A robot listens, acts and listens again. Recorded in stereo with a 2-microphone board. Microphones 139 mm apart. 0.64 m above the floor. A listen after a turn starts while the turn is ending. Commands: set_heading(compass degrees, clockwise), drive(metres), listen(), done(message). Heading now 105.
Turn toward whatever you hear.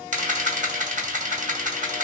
set_heading(170)
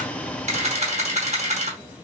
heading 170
set_heading(225)
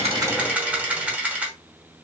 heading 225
set_heading(235)
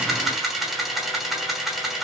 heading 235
done("Facing the camera shutter.")